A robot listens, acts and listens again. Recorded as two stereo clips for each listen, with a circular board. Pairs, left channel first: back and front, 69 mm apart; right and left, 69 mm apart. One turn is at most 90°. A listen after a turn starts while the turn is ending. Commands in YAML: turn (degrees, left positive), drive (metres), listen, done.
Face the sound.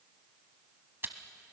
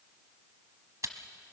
turn: 55
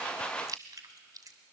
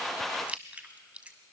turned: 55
turn: 20
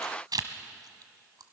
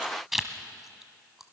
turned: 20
done: "Found it: chewing, straight ahead, 1 to 2 m away."